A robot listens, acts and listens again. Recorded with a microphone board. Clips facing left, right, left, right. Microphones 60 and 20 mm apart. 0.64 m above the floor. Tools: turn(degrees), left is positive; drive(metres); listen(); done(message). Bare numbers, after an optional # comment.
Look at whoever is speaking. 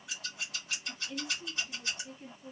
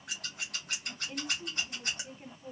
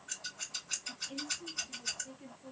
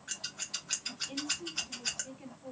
# The woman speaking: about 45° right or 135° right.
turn(-45)
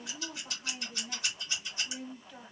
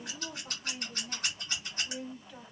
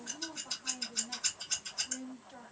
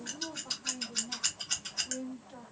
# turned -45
done("Facing the woman speaking.")